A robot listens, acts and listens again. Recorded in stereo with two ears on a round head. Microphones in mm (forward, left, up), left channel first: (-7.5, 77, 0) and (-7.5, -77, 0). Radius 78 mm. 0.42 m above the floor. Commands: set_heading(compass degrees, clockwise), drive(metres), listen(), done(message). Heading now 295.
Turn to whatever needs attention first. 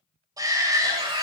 set_heading(315)
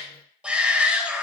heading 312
done("Found it: a shout, straight ahead.")